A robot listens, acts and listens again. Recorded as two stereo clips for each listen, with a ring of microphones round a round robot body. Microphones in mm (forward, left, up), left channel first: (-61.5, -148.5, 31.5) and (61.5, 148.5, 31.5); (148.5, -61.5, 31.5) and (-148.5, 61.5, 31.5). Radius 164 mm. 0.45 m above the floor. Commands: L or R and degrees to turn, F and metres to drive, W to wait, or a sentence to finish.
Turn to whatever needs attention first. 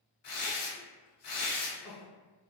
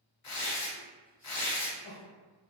R100
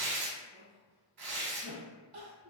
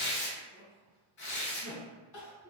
Facing the crying.